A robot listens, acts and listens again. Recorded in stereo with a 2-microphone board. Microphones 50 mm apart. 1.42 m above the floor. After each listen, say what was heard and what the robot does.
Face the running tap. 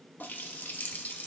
The running tap: about 40° left or 140° left. Turn 40° left.
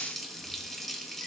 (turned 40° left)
Facing the running tap, 1 to 2 m away.